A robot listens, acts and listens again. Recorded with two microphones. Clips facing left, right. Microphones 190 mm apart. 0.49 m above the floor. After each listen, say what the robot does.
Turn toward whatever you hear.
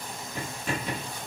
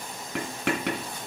Turn 90° right.
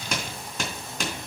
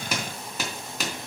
Found it: writing, straight ahead.